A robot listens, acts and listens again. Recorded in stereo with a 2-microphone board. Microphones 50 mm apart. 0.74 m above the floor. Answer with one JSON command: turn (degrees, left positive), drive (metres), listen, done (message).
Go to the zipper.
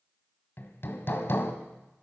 {"listen": true}
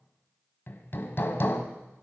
{"listen": true}
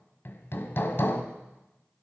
{"done": "I can't make out a zipper to turn to."}